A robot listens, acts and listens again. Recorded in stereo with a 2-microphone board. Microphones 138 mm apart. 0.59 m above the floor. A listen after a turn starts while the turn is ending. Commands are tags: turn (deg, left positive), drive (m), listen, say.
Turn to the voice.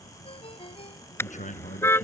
<turn deg="65"/>
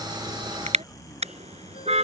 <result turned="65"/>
<say>Found it: a man speaking, straight ahead.</say>